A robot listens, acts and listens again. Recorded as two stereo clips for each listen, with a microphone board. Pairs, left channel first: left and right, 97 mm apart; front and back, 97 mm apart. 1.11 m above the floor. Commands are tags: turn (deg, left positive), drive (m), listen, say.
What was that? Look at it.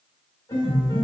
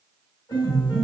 <turn deg="45"/>
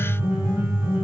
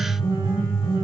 <turn deg="-25"/>
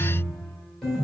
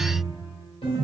<say>Facing the piano.</say>